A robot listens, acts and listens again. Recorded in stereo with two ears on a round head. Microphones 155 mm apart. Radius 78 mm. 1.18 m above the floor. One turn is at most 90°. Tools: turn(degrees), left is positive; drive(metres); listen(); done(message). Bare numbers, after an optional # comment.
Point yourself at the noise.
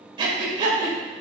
# The breathing: about 30° right or 150° right.
turn(-30)
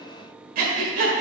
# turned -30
# So it is at 115° right.
turn(-90)
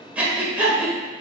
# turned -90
# The breathing is now 10° right.
turn(-10)
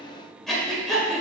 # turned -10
done("Facing the breathing.")